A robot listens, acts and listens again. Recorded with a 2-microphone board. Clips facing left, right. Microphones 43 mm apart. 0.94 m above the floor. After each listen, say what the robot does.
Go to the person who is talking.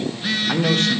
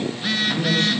Turn 70° left.
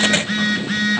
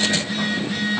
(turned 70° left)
Keep listening.
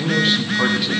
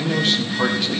Drive 1.0 m forward.
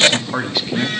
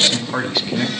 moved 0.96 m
Drive 1.0 m forward.
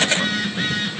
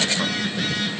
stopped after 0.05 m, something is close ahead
Keep listening.
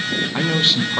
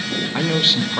I am next to the man speaking.